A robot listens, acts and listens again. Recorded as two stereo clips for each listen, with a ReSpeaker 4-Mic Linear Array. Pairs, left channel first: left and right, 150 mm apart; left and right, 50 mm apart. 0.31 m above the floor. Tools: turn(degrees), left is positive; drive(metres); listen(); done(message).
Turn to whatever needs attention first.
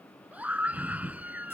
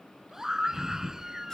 turn(degrees=-30)
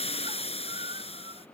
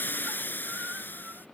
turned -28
listen()
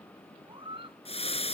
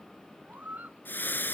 turn(degrees=-140)
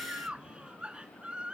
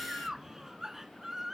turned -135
turn(degrees=-10)
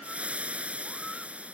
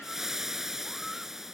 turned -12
listen()
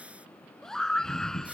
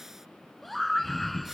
done("Found it: a scream, straight ahead.")